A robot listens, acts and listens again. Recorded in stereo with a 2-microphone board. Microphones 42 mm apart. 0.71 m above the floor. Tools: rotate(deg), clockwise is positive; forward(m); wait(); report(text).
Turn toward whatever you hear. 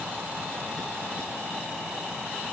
wait()
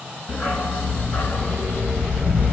rotate(-55)
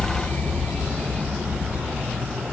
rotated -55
rotate(-55)
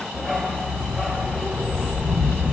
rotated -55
report("Found it: a dog barking, straight ahead.")